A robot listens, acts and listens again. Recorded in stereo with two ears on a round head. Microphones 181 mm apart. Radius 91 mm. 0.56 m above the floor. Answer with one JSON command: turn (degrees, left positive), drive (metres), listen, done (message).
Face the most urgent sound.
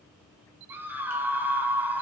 {"turn": -30}
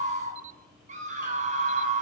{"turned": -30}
{"turn": -140}
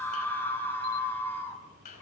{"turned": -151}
{"turn": 10}
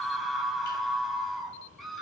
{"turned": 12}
{"done": "Facing the scream."}